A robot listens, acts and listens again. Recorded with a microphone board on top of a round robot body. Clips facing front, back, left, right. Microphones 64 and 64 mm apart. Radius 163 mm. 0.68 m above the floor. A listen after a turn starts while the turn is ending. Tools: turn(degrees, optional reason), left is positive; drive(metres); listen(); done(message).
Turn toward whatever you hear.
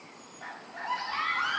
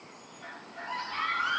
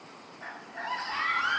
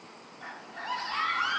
turn(degrees=20, reason="The scream: 20° left.")
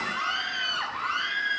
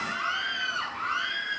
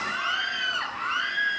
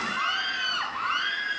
done("Found it: a scream, straight ahead.")